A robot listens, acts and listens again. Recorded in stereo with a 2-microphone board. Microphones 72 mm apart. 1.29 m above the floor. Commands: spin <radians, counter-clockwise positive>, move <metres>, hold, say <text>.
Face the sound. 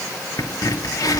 spin 1.05
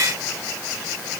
hold
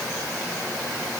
say I heard a crack, but can't make it out now. It was about straight ahead or 60° left.